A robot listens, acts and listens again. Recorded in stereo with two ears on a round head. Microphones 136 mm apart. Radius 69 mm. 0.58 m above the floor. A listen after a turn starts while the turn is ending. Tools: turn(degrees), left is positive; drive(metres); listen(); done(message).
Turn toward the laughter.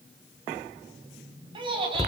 turn(degrees=-35)
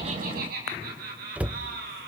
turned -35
turn(degrees=-110)
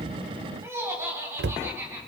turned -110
turn(degrees=-15)
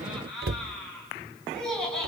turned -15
done("Found it: laughter, straight ahead, over 4 m away.")